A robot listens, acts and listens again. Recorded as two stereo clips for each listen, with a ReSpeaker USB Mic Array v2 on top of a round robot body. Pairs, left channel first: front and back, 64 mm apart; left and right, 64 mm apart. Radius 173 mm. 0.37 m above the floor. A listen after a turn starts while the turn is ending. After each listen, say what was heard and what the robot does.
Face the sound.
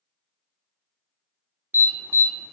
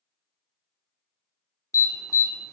The alarm: 125° left. Turn 125° left.
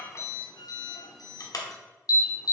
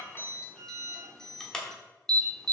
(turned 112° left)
The alarm is now 10° left. Turn 10° left.
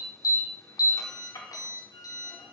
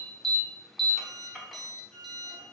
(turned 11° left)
Facing the alarm, 1 to 2 m away.